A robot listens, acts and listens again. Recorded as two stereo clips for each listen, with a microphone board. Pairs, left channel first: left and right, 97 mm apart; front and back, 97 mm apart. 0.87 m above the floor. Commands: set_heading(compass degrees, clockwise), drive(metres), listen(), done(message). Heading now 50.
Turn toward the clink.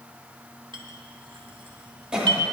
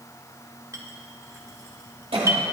set_heading(175)
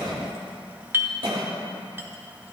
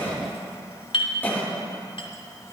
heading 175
set_heading(200)
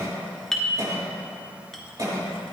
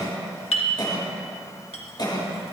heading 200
done("Facing the clink.")